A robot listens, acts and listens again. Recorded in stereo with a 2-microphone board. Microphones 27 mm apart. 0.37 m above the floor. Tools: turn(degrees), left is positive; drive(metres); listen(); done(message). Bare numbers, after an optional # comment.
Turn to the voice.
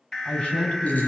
# The man speaking: about 45° left or 135° left.
turn(45)
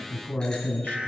# So it is at 85° left.
turn(85)
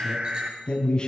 # The man speaking is now 30° left.
turn(30)
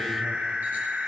listen()
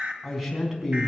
# The man speaking is now 10° right.
turn(-10)
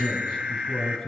done("Found it: a man speaking, straight ahead, over 4 m away.")